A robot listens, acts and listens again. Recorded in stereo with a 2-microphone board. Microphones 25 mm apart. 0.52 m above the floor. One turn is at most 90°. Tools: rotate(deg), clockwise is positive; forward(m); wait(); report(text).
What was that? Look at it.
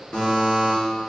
rotate(-60)
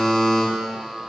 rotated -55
report("Found it: a buzzer, straight ahead, 1 to 2 m away.")